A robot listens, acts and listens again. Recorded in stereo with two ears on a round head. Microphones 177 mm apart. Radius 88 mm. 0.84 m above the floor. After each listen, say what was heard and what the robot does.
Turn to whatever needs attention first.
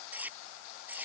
Keep listening.
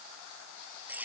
Keep listening.
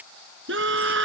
The scream: about 65° right or 115° right. Turn 65° right.
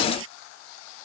Keep listening.
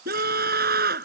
So it is at 50° right. Turn 50° right.
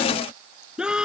Found it: a scream, straight ahead.